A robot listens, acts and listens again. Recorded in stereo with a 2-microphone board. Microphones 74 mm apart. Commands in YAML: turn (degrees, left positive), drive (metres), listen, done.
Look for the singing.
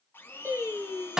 turn: -35
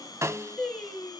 done: "Found it: singing, straight ahead, over 4 m away."